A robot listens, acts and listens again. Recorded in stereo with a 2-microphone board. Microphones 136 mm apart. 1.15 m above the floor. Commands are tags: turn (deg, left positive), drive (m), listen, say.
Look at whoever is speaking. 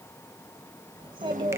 <turn deg="-40"/>
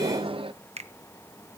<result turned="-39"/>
<say>Found it: a child speaking, straight ahead, 2 to 4 m away.</say>